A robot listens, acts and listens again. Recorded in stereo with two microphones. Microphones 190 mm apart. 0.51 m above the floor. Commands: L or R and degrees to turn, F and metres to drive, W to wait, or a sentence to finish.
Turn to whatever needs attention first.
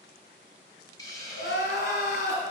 L65
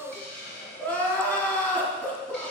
Found it: crying, straight ahead, 1 to 2 m away.